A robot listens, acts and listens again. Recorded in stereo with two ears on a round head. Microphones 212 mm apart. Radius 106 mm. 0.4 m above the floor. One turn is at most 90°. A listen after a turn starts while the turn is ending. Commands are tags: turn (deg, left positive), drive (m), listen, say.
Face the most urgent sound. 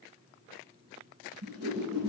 <listen/>
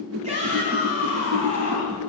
<turn deg="-30"/>
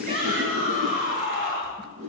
<turn deg="-90"/>
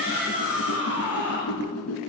<turn deg="-10"/>
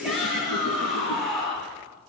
<say>Facing the shout.</say>